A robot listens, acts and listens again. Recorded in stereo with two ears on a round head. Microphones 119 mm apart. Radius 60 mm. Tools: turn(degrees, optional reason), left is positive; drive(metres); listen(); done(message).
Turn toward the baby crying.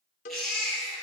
turn(degrees=30)
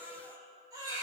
turn(degrees=-30, reason="So it is at 30° right.")
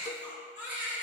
turn(degrees=-15, reason="The baby crying is now 15° right.")
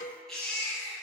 done("Facing the baby crying, 2 to 4 m away.")